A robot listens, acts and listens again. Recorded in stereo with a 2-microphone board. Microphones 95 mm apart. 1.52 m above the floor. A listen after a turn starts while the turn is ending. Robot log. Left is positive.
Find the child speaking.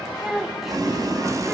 cmd yaw -30
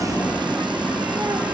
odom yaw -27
cmd idle
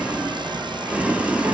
cmd idle
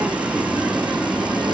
end: I heard a child speaking, but can't make it out now. It was about 25° left or 150° right.